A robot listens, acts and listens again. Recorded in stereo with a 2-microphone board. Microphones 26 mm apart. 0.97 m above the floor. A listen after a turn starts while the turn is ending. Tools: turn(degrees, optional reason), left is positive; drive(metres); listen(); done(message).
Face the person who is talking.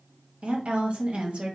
turn(degrees=-55, reason="The woman speaking: about 55° right or 125° right.")
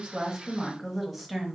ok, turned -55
done("Facing the woman speaking, 1 to 2 m away.")